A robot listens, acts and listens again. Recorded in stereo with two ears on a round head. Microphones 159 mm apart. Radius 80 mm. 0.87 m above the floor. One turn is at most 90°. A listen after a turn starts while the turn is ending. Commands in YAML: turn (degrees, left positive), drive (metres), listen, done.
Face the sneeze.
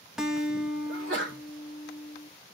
turn: -75
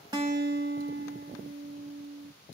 listen: true
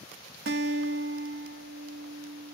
done: "I heard a sneeze, but can't make it out now. It was about straight ahead or 30° right."